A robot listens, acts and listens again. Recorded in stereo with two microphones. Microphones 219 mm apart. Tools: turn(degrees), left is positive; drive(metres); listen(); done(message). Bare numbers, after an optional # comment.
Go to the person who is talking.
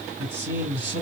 # The man speaking: about 55° right or 125° right.
turn(-55)
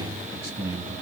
# So it is at 15° right.
turn(-15)
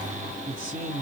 drive(1.0)
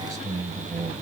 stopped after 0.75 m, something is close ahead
# The man speaking is now 20° right.
turn(-20)
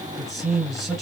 done("Arrived at the man speaking, straight ahead.")